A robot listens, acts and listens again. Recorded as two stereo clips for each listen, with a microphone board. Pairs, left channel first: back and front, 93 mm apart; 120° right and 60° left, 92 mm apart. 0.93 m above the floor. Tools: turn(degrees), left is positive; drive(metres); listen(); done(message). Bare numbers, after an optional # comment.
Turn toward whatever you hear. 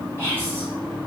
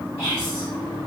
# The whispering: 65° right.
turn(-65)
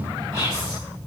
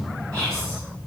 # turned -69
done("Found it: whispering, straight ahead.")